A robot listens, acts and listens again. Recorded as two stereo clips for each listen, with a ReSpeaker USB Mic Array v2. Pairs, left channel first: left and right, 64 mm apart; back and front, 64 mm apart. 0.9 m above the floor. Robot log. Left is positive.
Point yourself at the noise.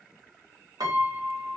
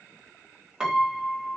note: The piano: 80° right.
cmd yaw -80
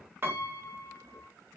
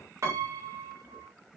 note: The piano is now 35° right.
cmd yaw -35
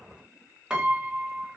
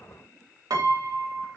note: The piano is now 15° right.
cmd yaw -15
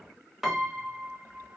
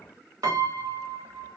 end: Facing the piano.